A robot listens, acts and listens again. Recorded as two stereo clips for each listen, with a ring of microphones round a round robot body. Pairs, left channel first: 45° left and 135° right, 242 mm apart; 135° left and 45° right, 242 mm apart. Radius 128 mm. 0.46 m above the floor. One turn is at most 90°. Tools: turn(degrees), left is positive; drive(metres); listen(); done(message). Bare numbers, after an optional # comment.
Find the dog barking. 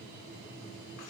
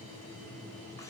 listen()
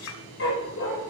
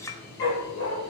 # The dog barking: 90° left.
turn(90)
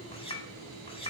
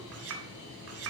listen()
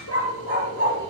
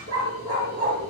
# The dog barking is now 10° left.
turn(10)
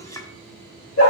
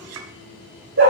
done("Facing the dog barking, over 4 m away.")